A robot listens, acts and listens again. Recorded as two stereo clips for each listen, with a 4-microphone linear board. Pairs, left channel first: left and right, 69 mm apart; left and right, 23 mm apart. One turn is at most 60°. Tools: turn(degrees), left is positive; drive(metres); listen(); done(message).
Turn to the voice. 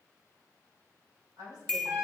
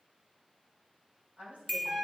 turn(degrees=-60)
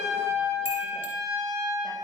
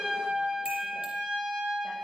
turn(degrees=-30)
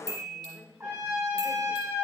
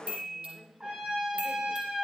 done("Found it: a woman speaking, straight ahead, 2 to 4 m away.")